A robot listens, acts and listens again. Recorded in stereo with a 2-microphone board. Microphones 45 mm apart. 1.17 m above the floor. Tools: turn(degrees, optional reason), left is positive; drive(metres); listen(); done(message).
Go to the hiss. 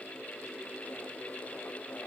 listen()
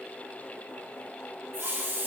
turn(degrees=-60, reason="The hiss: about 60° right or 120° right.")
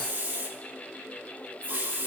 turn(degrees=-60, reason="So it is at 60° right.")
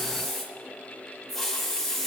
drive(metres=1.0)
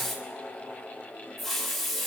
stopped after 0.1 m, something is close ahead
done("Something is in my way. I am facing the hiss but have not reached it.")